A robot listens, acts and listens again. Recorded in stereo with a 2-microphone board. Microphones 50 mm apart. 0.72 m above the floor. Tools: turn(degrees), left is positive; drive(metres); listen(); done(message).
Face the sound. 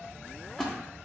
turn(degrees=30)
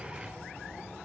listen()
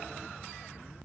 done("I heard a splash, but can't make it out now. It was about 20° right or 140° left.")